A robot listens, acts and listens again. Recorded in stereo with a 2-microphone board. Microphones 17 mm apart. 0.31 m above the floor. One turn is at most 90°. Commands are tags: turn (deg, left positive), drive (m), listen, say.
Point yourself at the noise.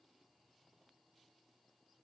<listen/>
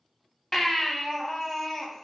<turn deg="20"/>
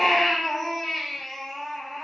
<say>Found it: a baby crying, straight ahead.</say>